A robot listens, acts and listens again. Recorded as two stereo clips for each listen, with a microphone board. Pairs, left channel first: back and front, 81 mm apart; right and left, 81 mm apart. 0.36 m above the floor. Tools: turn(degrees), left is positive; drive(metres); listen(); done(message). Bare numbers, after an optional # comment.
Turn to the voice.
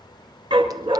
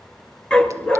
listen()
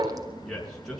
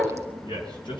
# The man speaking: 95° right.
turn(-95)
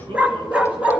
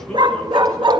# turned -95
listen()
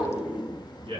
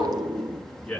done("Found it: a man speaking, straight ahead, over 4 m away.")